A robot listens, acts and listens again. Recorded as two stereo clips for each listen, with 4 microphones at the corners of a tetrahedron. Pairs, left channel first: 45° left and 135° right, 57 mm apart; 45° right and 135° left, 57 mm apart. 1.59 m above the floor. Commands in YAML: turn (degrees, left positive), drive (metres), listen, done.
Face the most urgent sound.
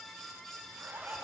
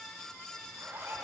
listen: true
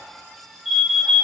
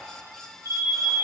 turn: -45
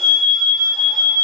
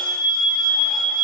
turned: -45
done: "Found it: an alarm, straight ahead."